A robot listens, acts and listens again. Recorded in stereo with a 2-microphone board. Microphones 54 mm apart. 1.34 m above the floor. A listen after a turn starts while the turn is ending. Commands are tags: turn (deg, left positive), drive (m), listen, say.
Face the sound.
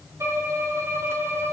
<turn deg="-55"/>
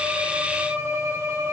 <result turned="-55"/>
<turn deg="-65"/>
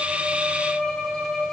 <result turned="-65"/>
<turn deg="15"/>
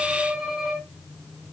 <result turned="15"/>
<say>Found it: a violin, straight ahead.</say>